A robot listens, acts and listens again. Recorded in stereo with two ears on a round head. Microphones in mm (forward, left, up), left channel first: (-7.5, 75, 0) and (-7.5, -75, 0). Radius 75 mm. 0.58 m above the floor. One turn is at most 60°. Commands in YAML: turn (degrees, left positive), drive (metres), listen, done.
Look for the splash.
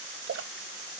turn: -60
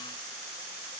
turn: -30
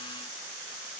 done: "Facing where the splash came from. I can't hear it now."